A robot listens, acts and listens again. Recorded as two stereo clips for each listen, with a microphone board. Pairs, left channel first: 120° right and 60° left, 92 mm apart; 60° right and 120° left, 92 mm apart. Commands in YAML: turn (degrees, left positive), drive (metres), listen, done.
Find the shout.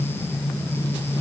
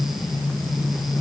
listen: true
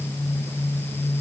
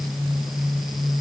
listen: true
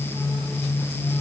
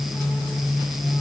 done: "I can't make out a shout."